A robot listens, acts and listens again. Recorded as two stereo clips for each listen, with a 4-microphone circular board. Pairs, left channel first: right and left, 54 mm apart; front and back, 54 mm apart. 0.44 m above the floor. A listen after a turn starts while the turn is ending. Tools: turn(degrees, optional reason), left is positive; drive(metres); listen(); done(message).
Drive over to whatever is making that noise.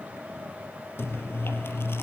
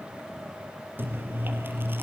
turn(degrees=-130, reason="The chewing: 130° right.")
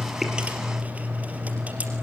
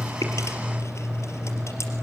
turn(degrees=30, reason="The chewing is now 30° left.")
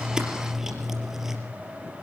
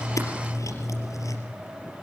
turn(degrees=10, reason="The chewing is now 10° left.")
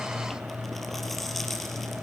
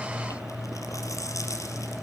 drive(metres=1.0)
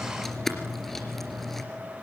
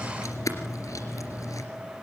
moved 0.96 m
drive(metres=1.0)
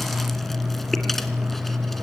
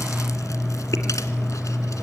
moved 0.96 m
drive(metres=1.0)
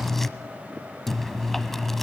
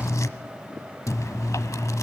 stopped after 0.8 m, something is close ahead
done("I am next to the chewing.")